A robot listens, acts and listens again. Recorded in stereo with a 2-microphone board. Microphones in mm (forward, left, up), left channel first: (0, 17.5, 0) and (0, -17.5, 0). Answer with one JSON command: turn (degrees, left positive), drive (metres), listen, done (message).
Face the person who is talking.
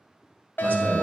{"turn": -55}
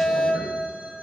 {"listen": true}
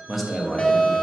{"done": "Found it: a man speaking, straight ahead, 1 to 2 m away."}